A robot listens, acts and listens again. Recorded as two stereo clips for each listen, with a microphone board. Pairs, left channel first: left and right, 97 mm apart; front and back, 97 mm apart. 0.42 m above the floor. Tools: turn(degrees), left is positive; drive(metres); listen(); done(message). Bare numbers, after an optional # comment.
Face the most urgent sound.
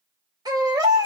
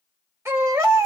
# The baby crying: 125° right.
turn(-125)
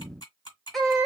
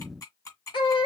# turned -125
done("Found it: a baby crying, straight ahead, 1 to 2 m away.")